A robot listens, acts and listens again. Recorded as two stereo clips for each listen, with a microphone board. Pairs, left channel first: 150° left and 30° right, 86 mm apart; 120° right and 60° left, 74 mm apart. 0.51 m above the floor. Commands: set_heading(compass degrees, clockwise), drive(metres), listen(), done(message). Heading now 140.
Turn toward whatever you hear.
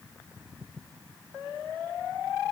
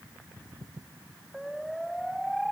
listen()
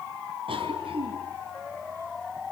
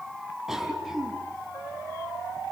set_heading(165)
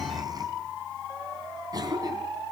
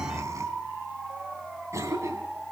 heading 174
set_heading(164)
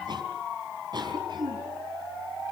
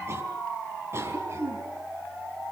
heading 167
done("Found it: a cough, straight ahead.")